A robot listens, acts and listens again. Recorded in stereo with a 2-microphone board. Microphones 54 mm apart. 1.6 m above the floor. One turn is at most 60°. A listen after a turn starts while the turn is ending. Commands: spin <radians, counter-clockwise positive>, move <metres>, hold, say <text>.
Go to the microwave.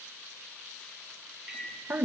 spin -0.52
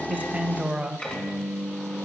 spin 0.44
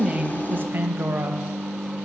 move 1.0
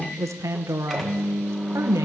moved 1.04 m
move 1.0
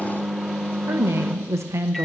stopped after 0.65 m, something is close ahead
say Arrived at the microwave, straight ahead.